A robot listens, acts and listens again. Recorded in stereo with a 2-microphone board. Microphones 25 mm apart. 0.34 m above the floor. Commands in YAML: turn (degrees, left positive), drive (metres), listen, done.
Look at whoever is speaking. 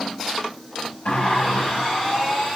listen: true
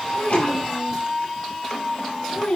turn: 45
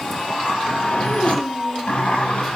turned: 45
listen: true
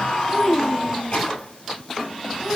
turn: 10
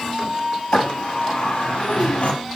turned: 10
listen: true
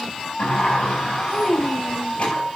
done: "Found it: a child speaking, straight ahead, 1 to 2 m away."